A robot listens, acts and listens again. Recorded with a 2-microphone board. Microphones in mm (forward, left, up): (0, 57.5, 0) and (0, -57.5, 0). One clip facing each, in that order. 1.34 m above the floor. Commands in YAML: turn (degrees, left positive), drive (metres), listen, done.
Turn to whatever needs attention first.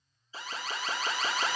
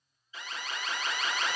turn: 35
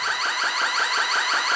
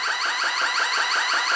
done: "Facing the alarm."